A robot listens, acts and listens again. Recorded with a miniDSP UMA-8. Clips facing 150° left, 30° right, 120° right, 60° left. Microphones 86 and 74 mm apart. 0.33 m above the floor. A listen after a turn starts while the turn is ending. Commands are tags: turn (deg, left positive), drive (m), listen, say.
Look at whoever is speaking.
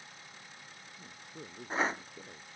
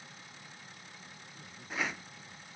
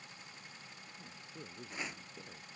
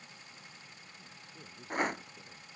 <turn deg="165"/>
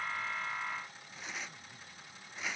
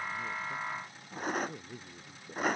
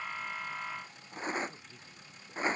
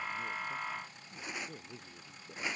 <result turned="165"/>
<say>Facing the man speaking.</say>